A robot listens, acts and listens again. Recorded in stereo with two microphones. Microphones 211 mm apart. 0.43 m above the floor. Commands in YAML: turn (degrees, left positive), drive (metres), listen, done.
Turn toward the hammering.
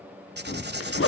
turn: 60
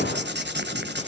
turn: 60
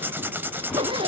listen: true
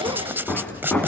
done: "Facing the hammering."